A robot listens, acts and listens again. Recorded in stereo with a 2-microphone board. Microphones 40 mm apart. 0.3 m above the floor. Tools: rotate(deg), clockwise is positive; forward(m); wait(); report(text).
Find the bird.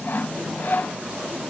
wait()
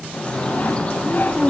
rotate(-30)
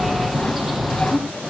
report("Facing the bird.")